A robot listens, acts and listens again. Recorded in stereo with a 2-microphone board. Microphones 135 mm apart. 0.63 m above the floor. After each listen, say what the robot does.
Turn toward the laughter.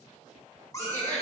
Turn 30° right.
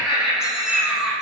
Facing the laughter, 1 to 2 m away.